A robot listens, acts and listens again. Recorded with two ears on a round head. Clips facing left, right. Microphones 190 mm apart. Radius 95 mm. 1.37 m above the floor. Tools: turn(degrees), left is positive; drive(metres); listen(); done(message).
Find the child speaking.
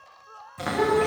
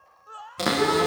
turn(degrees=75)
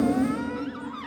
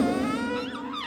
turn(degrees=30)
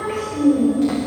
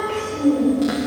turn(degrees=-10)
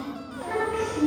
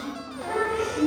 done("Found it: a child speaking, straight ahead.")